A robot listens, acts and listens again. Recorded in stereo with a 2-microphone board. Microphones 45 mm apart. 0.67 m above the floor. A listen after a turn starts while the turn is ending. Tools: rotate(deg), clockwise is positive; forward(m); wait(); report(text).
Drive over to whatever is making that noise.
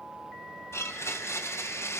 rotate(-75)
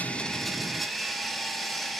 forward(1.0)
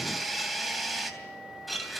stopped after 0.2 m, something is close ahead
report("Blocked. The blender is further on, straight ahead.")